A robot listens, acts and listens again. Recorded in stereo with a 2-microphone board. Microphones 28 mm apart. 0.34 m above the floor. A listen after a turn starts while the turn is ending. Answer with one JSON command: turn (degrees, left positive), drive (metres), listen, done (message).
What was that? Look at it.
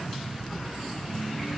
{"listen": true}
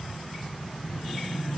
{"listen": true}
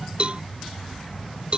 {"turn": -45}
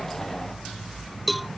{"done": "Facing the cowbell."}